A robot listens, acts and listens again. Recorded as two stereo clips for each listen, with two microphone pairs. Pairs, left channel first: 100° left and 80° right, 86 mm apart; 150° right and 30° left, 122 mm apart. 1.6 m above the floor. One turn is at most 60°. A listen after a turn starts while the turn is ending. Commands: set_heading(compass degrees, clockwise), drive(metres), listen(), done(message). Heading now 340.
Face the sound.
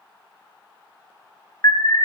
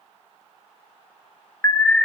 set_heading(280)
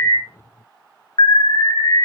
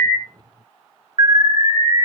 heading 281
set_heading(221)
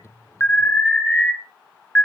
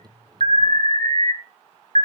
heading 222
set_heading(202)
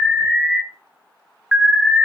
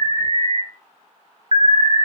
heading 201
done("Found it: an alarm, straight ahead, 1 to 2 m away.")